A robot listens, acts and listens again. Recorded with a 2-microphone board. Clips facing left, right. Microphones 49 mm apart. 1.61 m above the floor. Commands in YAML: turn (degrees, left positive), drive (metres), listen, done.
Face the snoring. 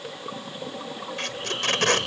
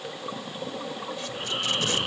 turn: -20
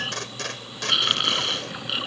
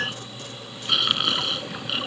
done: "Found it: snoring, straight ahead."